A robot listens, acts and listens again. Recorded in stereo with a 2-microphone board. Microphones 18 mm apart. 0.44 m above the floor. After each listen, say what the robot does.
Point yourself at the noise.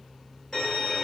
Turn 40° left.
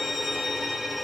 Found it: a violin, straight ahead.